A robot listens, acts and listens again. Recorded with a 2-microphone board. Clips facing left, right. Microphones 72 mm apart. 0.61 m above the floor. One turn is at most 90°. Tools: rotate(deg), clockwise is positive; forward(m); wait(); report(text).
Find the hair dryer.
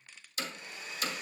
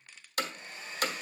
rotate(35)
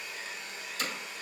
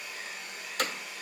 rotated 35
report("Found it: a hair dryer, straight ahead, 2 to 4 m away.")